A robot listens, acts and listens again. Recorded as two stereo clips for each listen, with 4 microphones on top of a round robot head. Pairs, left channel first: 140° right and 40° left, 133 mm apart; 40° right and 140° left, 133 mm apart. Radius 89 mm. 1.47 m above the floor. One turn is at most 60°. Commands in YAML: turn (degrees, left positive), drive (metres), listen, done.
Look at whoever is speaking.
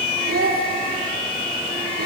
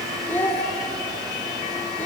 turn: 35
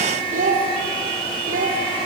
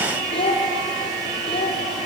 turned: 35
turn: 10
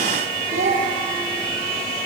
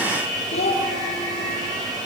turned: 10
done: "Found it: a child speaking, straight ahead."